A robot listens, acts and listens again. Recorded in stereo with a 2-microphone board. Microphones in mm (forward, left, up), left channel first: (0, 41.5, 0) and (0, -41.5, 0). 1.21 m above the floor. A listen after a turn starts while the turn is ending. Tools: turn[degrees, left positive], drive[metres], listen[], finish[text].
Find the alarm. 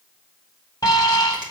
Thought: The alarm: about 45° left or 135° left.
Action: turn[45]
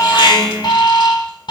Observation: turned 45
Thought: So it is at 85° left.
Action: turn[85]
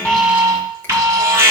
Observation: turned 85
Thought: The alarm is now 35° right.
Action: turn[-35]
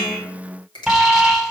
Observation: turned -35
Action: finish[Found it: an alarm, straight ahead.]